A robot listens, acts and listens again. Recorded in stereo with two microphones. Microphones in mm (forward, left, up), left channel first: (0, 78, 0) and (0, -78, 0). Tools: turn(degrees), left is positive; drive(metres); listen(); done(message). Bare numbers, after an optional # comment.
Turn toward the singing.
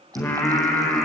turn(30)
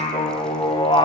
# So it is at 145° left.
turn(145)
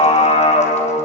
# The singing is now 35° left.
turn(35)
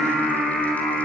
done("Found it: singing, straight ahead, over 4 m away.")